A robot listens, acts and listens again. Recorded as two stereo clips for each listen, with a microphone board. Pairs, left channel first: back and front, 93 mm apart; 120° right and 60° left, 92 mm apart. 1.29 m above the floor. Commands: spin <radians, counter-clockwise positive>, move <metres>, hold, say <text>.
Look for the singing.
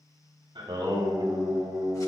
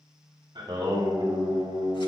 spin 0.79
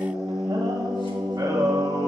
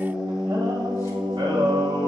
spin 0.87
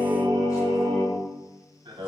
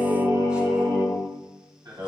spin 0.35
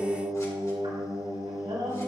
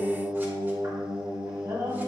spin 0.17
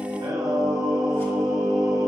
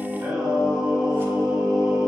say Found it: singing, straight ahead.